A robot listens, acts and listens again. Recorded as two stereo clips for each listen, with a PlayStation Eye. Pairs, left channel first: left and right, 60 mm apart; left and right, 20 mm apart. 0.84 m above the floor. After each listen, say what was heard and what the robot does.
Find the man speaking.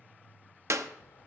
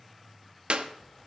Keep listening.
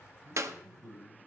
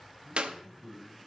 The man speaking: about 70° right or 110° right. Turn 70° right.
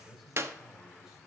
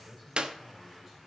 So it is at 10° right. Turn 10° right.
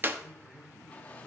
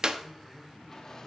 Keep listening.
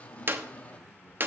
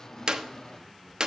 Keep listening.
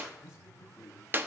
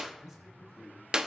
The man speaking is now 15° right. Turn 15° right.
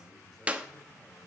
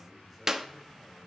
Keep listening.
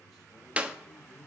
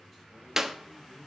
Keep listening.
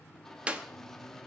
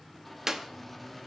I heard a man speaking from this way, but can't make it out now.